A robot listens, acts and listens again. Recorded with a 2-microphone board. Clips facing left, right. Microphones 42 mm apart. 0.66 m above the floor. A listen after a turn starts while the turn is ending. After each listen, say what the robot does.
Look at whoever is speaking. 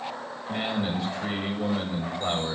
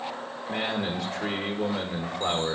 Turn 65° right.
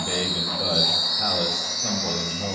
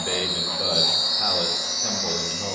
Turn 20° right.
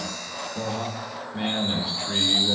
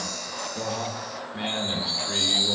Found it: a man speaking, straight ahead, 1 to 2 m away.